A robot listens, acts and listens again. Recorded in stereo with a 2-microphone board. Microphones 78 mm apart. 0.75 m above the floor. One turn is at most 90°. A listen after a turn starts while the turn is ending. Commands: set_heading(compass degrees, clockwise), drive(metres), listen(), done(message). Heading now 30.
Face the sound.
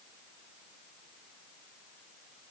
listen()
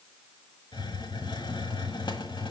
set_heading(300)
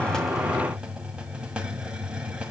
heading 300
set_heading(310)
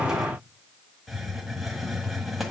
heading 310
done("Found it: a hiss, straight ahead.")